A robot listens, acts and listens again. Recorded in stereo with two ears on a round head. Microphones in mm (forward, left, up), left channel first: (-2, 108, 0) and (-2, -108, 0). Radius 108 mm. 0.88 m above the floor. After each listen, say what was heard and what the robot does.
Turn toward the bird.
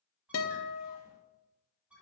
Turn 30° right.
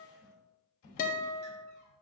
Keep listening.
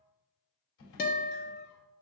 Keep listening.
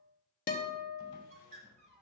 So it is at 145° right. Turn 145° right.
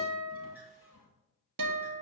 Keep listening.
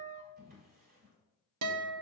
Keep listening.
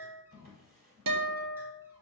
I heard a bird from this way, but can't make it out now.